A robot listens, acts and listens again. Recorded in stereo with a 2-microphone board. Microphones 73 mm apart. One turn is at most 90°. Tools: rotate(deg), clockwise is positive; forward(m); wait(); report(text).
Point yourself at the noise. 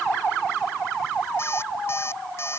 rotate(-35)
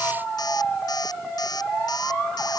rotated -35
rotate(-90)
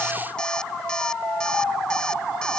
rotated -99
rotate(-10)
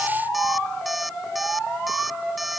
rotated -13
report("Facing the alarm clock.")